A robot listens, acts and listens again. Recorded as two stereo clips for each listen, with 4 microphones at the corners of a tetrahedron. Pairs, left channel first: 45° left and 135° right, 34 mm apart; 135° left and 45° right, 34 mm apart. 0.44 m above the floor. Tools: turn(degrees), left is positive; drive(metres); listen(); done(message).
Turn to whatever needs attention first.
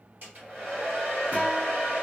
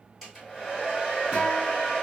listen()
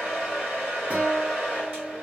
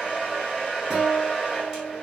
listen()
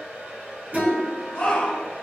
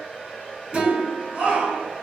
done("Found it: a shout, straight ahead, 1 to 2 m away.")